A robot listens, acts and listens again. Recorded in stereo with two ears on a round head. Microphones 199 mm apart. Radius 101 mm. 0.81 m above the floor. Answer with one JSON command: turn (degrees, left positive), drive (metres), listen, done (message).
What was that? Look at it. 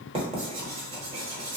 {"turn": -25}
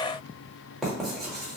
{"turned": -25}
{"done": "Found it: writing, straight ahead."}